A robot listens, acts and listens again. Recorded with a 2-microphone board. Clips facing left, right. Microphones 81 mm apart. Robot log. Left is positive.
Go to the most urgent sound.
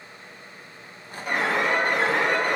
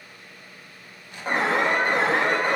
note: The alarm: about 35° right or 145° right.
cmd yaw -35
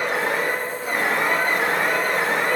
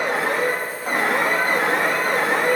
note: So it is at 110° right.
cmd yaw -110
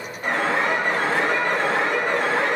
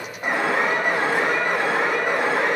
note: The alarm is now 15° right.
cmd yaw -15
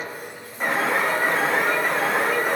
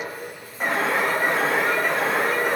cmd fwd 1.0
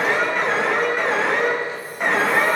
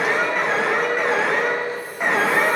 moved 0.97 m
cmd fwd 1.0
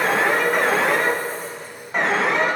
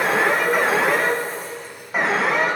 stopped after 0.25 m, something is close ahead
end: Arrived at the alarm, straight ahead.